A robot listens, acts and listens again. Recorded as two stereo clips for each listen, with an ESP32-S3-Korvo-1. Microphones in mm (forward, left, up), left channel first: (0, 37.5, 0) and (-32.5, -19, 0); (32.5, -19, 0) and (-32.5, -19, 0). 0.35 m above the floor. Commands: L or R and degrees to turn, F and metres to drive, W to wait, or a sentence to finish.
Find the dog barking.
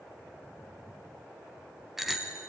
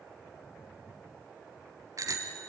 W
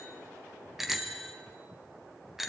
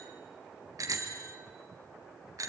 W
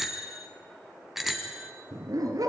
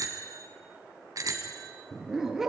R95
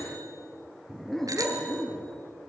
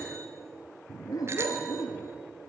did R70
R25
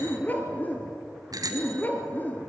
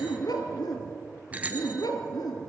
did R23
Found it: a dog barking, straight ahead.